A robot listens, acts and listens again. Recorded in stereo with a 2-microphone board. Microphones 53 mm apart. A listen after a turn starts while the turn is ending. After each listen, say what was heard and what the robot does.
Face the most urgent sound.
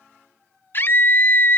The scream: about 45° left or 135° left. Turn 45° left.
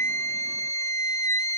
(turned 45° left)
So it is at 90° left. Turn 90° left.
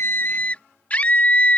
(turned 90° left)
The scream is now 30° left. Turn 30° left.
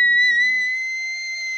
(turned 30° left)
Facing the scream.